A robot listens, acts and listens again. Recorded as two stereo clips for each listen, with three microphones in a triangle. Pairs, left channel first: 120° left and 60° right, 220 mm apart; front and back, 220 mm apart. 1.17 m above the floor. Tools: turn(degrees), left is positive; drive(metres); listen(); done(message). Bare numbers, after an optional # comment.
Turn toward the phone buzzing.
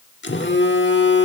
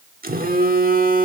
# The phone buzzing: 140° left.
turn(140)
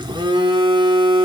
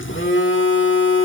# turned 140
# The phone buzzing is now 10° left.
turn(10)
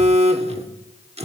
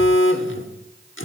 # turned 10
done("Facing the phone buzzing.")